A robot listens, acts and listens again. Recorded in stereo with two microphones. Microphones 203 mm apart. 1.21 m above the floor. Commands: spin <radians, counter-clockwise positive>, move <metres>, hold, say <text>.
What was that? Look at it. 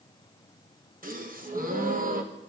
spin -0.79
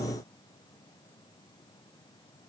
hold
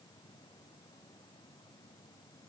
say I heard a gasp, but can't make it out now. It was about straight ahead or 90° right.